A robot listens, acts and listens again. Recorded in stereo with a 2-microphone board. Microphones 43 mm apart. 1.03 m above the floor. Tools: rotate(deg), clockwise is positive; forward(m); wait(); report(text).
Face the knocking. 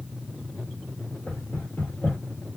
rotate(-40)
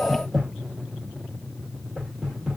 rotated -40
report("Facing the knocking.")